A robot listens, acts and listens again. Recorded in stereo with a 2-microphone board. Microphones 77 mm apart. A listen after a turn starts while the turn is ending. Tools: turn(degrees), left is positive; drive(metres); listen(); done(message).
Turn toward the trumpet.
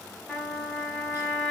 turn(degrees=30)
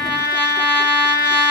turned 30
turn(degrees=-20)
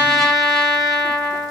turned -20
done("Found it: a trumpet, straight ahead, 1 to 2 m away.")